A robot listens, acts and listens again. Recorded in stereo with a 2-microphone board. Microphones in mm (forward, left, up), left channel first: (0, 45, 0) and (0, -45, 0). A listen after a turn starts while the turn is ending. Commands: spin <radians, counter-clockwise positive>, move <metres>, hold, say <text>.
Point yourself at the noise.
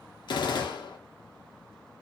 spin 1.05
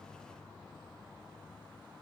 hold
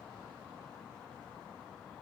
say I heard a gunshot, but can't make it out now. It was about straight ahead or 60° left.